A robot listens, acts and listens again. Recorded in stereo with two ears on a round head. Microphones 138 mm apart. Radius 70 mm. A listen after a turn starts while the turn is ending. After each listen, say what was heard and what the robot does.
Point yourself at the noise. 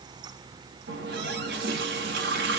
Turn 90° right.
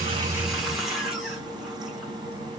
Found it: a running tap, straight ahead.